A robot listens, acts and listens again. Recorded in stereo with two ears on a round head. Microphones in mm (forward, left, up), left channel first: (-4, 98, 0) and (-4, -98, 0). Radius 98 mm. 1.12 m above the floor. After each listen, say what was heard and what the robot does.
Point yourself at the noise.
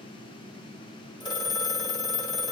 The phone ringing: about 20° left or 160° left. Turn 20° left.
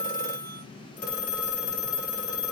So it is at 140° left. Turn 140° left.
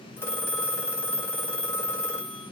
The phone ringing is now 10° left. Turn 10° left.
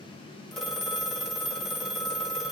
Facing the phone ringing, 1 to 2 m away.